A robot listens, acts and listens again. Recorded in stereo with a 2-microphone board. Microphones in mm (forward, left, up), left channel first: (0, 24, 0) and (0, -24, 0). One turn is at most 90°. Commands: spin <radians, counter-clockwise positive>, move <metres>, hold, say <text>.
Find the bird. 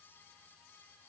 hold
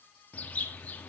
spin 0.52
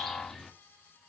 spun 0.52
say Found it: a bird, straight ahead, 1 to 2 m away.